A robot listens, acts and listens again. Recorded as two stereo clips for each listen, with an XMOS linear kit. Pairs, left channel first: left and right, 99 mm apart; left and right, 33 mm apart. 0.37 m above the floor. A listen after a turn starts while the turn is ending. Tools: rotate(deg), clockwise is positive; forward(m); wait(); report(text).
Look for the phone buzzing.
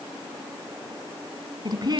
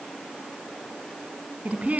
wait()
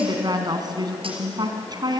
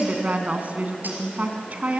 wait()
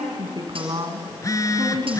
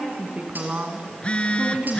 rotate(-35)
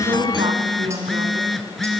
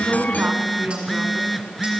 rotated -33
report("Facing the phone buzzing.")